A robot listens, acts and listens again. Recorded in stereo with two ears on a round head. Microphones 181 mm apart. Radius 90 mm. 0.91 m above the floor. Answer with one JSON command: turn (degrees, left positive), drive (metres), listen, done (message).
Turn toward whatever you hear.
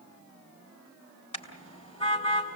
{"turn": 30}
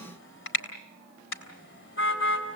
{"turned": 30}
{"turn": 115}
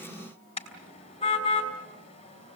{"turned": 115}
{"turn": 25}
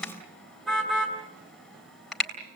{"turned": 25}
{"done": "Found it: a car horn, straight ahead."}